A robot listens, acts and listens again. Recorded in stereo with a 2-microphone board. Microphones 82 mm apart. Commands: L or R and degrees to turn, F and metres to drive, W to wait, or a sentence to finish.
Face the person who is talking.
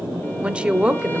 R30
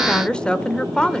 L15
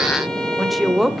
Facing the woman speaking, 1 to 2 m away.